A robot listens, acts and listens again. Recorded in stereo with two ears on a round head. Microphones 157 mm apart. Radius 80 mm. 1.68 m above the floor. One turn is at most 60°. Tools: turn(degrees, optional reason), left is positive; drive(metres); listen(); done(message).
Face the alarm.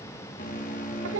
turn(degrees=50, reason="The alarm: about 50° left or 130° left.")
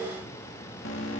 turn(degrees=60, reason="So it is at 80° left.")
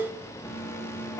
turn(degrees=15, reason="The alarm is now 15° left.")
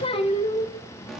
done("Found it: an alarm, straight ahead.")